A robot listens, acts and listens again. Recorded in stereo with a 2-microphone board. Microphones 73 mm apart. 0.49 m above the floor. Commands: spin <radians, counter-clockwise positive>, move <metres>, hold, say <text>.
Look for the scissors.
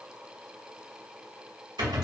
hold
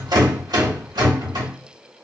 hold
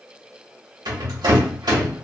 say I can't make out scissors, only a rattle.